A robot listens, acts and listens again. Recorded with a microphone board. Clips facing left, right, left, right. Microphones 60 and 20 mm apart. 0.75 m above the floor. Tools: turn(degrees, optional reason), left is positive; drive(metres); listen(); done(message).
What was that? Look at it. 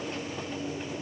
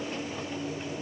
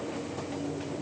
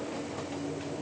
listen()
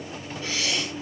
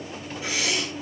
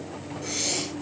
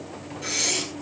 turn(degrees=-30)
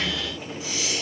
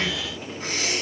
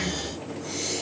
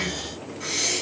turn(degrees=-135, reason="So it is at 135° right.")
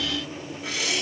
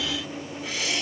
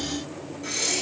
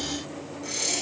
done("Found it: breathing, straight ahead, over 4 m away.")